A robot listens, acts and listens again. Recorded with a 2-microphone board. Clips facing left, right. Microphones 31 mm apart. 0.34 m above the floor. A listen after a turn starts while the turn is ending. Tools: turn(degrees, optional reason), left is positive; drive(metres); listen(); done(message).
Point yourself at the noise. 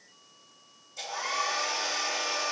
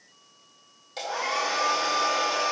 turn(degrees=-90)
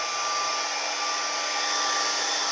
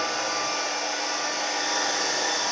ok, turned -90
done("Facing the hair dryer, 2 to 4 m away.")